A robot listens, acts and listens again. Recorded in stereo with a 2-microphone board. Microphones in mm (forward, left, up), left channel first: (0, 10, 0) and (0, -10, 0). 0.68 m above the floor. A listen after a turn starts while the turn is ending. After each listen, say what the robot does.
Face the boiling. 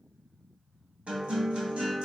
Keep listening.
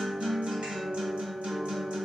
Keep listening.
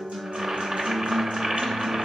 Turn 35° right.
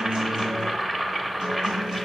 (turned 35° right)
Found it: boiling, straight ahead.